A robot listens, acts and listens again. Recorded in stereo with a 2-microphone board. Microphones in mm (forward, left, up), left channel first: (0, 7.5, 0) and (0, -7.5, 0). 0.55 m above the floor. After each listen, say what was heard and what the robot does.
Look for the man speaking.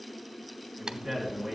Turn 30° right.
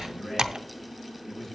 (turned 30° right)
So it is at 25° left. Turn 25° left.
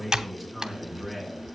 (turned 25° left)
The man speaking is now 15° left. Turn 15° left.
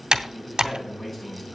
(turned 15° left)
The man speaking is now 15° left. Turn 15° left.
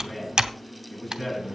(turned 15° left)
The man speaking is now 10° left. Turn 10° left.
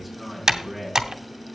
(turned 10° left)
Found it: a man speaking, straight ahead, over 4 m away.